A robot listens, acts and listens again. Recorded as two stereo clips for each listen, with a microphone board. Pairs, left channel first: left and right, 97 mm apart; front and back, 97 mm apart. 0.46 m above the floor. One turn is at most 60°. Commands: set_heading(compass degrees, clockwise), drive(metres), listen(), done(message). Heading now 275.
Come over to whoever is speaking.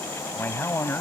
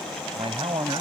set_heading(215)
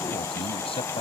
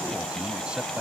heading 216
set_heading(156)
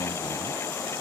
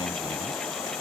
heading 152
set_heading(117)
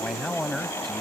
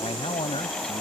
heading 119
drive(1.0)
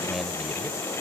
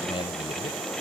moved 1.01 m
listen()
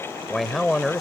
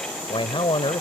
drive(1.0)
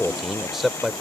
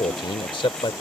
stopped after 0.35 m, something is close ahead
done("Arrived at the man speaking, straight ahead.")